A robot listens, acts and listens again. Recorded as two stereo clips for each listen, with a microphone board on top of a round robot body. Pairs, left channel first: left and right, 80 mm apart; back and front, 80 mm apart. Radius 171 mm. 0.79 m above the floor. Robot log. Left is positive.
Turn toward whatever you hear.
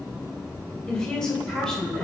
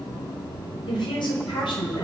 note: The woman speaking: 175° left.
cmd yaw +175
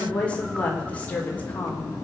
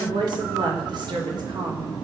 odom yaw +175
note: The woman speaking is now 20° left.
cmd yaw +20
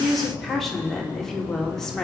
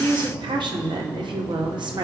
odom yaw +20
end: Facing the woman speaking, 2 to 4 m away.